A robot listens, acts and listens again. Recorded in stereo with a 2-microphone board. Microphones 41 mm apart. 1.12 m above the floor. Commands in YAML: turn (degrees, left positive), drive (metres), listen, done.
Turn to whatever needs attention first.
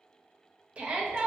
turn: -30
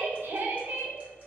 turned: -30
turn: -120
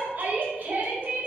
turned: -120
turn: -45
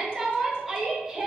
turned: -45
turn: -10
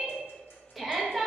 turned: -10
done: "Facing the shout."